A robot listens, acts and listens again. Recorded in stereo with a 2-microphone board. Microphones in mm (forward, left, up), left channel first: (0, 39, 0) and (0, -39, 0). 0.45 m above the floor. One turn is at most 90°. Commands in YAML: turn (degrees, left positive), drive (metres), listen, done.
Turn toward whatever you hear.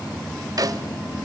turn: -50
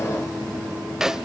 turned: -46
done: "Found it: a snare drum, straight ahead, under 1 m away."